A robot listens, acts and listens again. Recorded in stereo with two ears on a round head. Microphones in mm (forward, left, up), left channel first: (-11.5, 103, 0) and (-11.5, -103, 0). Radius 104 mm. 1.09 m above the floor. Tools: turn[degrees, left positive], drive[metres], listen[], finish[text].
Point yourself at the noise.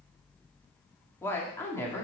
Action: turn[30]
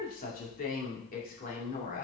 Thought: So it is at 140° left.
Action: turn[140]
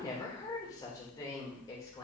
Thought: The woman speaking is now 15° left.
Action: turn[15]
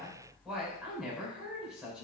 Action: finish[Found it: a woman speaking, straight ahead, 2 to 4 m away.]